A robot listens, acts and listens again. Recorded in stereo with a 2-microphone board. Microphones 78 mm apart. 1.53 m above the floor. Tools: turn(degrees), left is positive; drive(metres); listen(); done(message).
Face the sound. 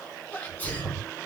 turn(degrees=25)
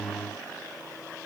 listen()
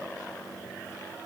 done("I heard a sneeze, but can't make it out now. It was about straight ahead or 130° left.")